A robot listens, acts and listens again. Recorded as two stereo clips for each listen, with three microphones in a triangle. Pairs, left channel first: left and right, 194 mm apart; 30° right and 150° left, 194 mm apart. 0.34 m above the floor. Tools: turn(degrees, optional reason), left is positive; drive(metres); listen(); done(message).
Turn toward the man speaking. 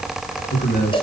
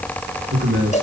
turn(degrees=130, reason="The man speaking: 130° left.")
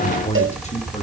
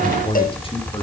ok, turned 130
turn(degrees=35, reason="The man speaking is now 35° left.")
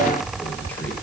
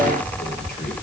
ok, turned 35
listen()
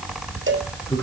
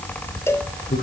turn(degrees=10, reason="The man speaking is now 10° left.")
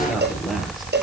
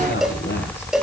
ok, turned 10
done("Facing the man speaking.")